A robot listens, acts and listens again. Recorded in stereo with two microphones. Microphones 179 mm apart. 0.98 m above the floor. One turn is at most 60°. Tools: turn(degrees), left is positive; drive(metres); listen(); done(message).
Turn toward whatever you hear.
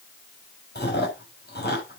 turn(degrees=60)
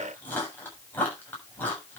turn(degrees=10)
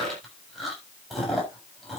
done("Found it: chewing, straight ahead.")